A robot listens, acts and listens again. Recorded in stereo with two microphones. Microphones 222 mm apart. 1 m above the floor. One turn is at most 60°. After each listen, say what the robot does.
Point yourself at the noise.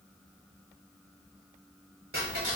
Turn 60° right.
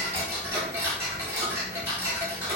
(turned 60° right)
Turn 10° right.
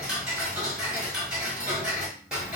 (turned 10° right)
Facing the ticking, under 1 m away.